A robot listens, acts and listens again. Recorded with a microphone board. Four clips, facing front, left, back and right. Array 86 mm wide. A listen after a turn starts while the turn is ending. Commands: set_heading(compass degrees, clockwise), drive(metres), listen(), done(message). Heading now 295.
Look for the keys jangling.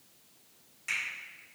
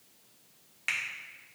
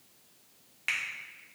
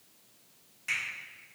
listen()
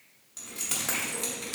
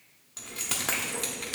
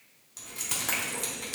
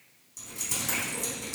set_heading(205)
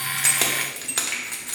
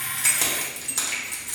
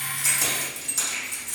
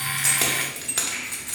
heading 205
set_heading(230)
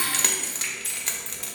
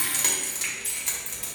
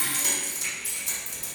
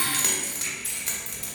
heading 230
done("Facing the keys jangling, under 1 m away.")